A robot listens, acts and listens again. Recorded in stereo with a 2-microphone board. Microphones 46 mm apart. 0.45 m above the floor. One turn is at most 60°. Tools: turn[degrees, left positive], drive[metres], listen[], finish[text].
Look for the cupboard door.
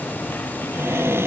Thought: The cupboard door: about 70° right or 110° right.
Action: turn[-60]
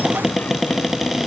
Action: finish[Facing the cupboard door.]